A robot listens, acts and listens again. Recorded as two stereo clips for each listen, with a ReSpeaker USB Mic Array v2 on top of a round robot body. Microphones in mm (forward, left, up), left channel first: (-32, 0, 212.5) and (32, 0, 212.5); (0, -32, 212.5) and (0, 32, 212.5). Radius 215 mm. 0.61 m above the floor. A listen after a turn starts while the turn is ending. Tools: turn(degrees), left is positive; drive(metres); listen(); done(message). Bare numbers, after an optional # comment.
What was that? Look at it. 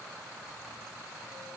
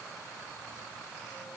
listen()
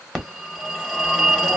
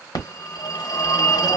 # The phone ringing: 90° right.
turn(-90)
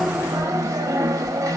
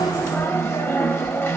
# The phone ringing is now 35° right.
turn(-35)
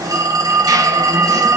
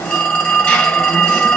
# The phone ringing is now 20° right.
turn(-20)
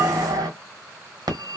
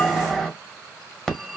done("Found it: a phone ringing, straight ahead, 1 to 2 m away.")